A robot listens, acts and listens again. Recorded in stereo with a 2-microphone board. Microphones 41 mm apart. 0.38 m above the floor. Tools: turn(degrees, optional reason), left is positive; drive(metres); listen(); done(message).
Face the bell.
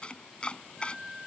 listen()
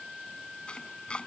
listen()
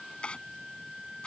done("I can't make out a bell, only a flute and chopping.")